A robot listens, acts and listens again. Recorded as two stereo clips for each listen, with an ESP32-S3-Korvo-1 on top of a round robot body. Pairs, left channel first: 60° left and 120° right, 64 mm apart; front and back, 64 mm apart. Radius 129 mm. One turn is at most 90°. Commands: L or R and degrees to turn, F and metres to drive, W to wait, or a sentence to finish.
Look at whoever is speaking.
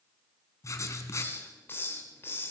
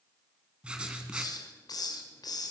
W
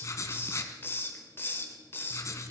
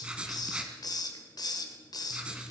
W
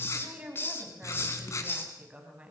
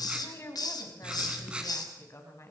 R50
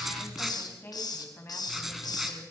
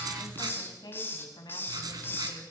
Facing the woman speaking, over 4 m away.